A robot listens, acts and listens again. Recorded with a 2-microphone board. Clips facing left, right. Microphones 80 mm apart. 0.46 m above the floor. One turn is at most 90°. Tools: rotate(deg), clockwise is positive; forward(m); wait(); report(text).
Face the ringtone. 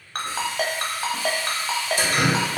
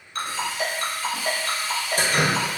rotate(-65)
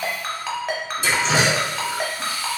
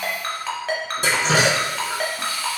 report("Found it: a ringtone, straight ahead, under 1 m away.")